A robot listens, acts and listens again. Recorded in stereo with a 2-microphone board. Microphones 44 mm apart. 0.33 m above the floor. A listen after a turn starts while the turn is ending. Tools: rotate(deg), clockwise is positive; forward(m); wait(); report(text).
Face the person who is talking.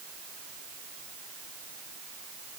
wait()
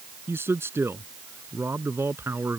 rotate(75)
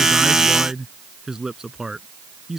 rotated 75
rotate(15)
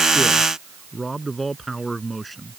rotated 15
report("Found it: a man speaking, straight ahead.")